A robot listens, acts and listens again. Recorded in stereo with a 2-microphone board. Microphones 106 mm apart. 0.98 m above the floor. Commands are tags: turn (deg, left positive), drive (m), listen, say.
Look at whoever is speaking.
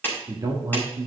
<turn deg="-35"/>
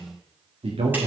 <turn deg="-110"/>
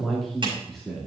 <say>Facing the man speaking, 2 to 4 m away.</say>